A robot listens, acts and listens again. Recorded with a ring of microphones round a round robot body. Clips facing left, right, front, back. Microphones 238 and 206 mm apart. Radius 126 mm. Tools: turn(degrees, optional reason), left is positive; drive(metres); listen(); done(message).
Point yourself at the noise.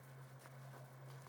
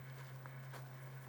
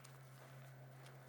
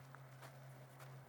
listen()
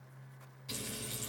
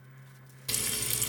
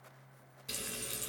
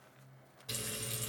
turn(degrees=-70, reason="The frying: 70° right.")
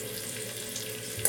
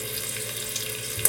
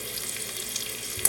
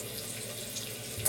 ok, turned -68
done("Found it: frying, straight ahead, 1 to 2 m away.")